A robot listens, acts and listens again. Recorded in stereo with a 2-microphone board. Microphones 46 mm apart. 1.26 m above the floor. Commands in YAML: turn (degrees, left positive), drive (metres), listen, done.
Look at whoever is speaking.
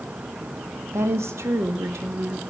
turn: -90
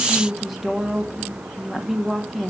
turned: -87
done: "Facing the woman speaking, 1 to 2 m away."